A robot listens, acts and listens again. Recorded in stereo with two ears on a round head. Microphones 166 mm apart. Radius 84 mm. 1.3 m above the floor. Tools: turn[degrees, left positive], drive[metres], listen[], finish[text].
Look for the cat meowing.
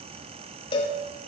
Action: listen[]
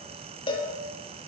Action: listen[]
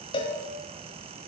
Action: finish[I can't make out a cat meowing, only a cowbell.]